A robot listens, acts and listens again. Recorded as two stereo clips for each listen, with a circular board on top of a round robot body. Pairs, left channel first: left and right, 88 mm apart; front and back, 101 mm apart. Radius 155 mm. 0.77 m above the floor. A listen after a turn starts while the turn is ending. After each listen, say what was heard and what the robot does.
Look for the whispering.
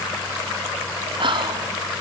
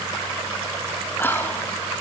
The whispering: 70° right. Turn 70° right.
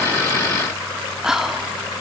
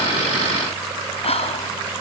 Found it: whispering, straight ahead, 2 to 4 m away.